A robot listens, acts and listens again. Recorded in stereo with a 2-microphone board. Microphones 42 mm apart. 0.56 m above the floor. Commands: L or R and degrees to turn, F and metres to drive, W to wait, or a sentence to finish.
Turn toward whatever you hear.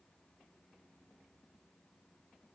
W
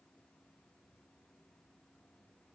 W
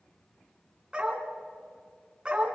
R20
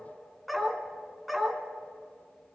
Facing the dog barking, 2 to 4 m away.